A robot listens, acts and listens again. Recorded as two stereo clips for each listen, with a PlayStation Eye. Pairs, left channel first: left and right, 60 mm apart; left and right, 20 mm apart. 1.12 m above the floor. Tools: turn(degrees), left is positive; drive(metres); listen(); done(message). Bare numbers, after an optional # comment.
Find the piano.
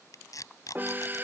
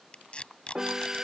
# The piano: about 30° right or 150° right.
turn(-30)
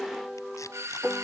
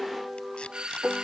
done("Facing the piano.")